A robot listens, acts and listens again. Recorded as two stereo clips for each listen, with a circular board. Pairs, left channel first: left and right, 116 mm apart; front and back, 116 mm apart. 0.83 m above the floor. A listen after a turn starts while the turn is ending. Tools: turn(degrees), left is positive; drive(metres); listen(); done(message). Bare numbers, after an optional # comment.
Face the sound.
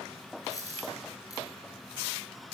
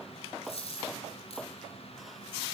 # The dropped coin: 30° left.
turn(30)
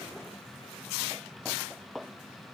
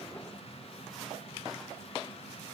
done("I heard a dropped coin from this way, but can't make it out now.")